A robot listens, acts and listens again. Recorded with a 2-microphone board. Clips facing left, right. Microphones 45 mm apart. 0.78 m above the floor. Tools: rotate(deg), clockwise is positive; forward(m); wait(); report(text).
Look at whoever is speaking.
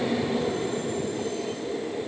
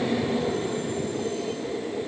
wait()
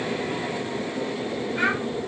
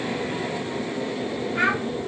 rotate(45)
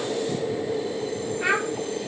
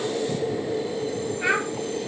report("Facing the child speaking, 2 to 4 m away.")